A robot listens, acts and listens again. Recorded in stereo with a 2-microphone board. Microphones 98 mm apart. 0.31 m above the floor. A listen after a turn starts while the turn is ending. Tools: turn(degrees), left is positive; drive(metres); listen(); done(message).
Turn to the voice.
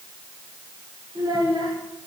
turn(degrees=-45)
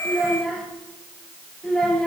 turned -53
done("Facing the child speaking.")